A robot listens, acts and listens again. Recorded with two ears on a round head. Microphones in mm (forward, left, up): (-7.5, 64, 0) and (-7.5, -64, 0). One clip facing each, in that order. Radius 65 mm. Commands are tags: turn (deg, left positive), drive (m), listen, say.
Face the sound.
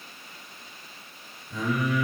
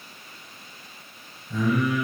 <turn deg="-60"/>
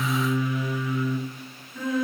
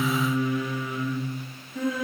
<turn deg="-50"/>
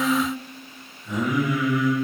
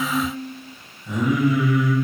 <say>Found it: singing, straight ahead, 1 to 2 m away.</say>